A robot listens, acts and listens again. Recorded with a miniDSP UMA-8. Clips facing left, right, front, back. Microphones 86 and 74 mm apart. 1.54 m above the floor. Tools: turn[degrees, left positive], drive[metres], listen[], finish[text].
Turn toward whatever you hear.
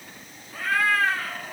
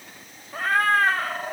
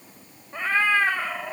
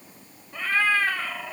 Thought: The cat meowing: 60° right.
Action: turn[-60]
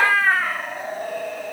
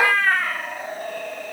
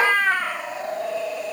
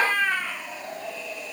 Thought: The cat meowing is now 10° left.
Action: turn[10]
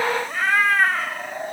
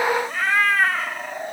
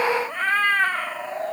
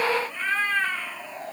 Action: finish[Facing the cat meowing.]